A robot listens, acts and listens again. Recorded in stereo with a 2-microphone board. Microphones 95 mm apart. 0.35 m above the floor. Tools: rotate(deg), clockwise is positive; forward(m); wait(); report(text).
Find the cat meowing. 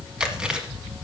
wait()
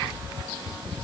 wait()
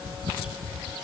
report("I can't make out a cat meowing to turn to.")